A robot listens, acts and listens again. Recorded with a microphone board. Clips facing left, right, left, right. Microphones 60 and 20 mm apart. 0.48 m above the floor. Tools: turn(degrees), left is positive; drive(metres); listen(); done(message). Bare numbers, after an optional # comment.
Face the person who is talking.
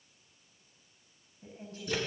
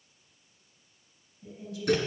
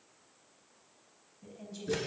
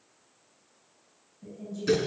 # The woman speaking: about 40° left or 140° left.
turn(40)
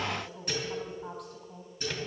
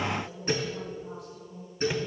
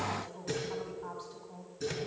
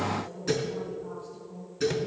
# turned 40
# So it is at 95° left.
turn(95)
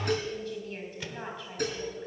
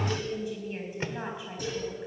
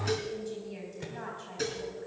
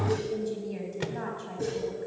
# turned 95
# The woman speaking is now 15° right.
turn(-15)
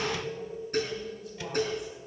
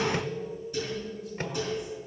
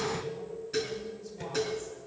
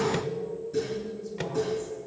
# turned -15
listen()
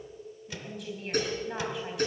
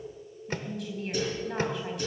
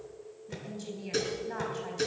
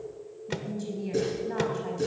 done("Facing the woman speaking, 2 to 4 m away.")